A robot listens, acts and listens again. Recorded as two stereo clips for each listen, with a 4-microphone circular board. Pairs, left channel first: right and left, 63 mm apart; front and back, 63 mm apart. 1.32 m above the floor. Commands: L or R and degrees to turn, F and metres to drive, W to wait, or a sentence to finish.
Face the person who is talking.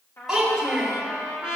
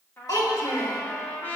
Facing the child speaking, 2 to 4 m away.